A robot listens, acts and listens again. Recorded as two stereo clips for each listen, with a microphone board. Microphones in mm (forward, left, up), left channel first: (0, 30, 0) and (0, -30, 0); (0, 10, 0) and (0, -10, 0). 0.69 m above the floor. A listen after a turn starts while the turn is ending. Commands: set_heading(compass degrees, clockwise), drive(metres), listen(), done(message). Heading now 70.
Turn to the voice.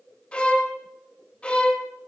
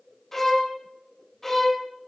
listen()
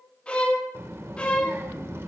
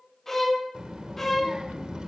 set_heading(120)
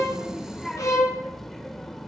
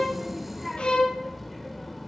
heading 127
done("Found it: a child speaking, straight ahead, 2 to 4 m away.")